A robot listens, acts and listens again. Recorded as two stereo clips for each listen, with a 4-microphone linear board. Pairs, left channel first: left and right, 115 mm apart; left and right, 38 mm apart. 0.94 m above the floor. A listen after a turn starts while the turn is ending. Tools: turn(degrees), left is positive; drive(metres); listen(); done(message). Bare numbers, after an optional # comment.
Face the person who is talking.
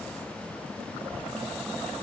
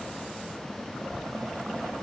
turn(-30)
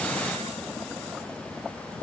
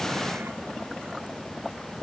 listen()
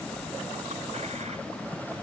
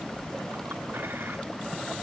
# So it is at 15° left.
turn(15)
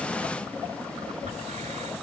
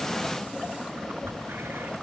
done("Found it: a child speaking, straight ahead.")